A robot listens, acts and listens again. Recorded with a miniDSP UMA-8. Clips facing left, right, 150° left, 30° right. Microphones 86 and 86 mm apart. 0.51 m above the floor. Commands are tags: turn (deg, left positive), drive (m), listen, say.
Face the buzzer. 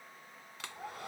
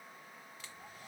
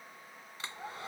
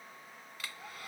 <listen/>
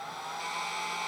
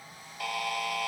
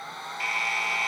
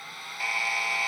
<turn deg="-115"/>
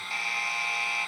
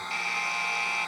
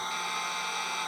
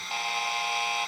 <say>Found it: a buzzer, straight ahead.</say>